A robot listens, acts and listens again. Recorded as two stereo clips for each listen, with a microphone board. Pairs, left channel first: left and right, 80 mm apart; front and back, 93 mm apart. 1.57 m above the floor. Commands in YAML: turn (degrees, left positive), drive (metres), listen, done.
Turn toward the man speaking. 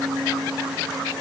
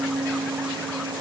listen: true
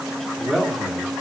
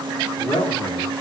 done: "Facing the man speaking, 2 to 4 m away."